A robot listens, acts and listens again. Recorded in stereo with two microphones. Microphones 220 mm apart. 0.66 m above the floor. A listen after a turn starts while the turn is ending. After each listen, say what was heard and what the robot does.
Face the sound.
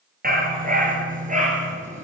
The dog barking: about 35° right or 145° right. Turn 35° right.
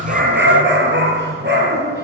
So it is at 125° right. Turn 125° right.
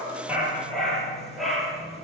Found it: a dog barking, straight ahead.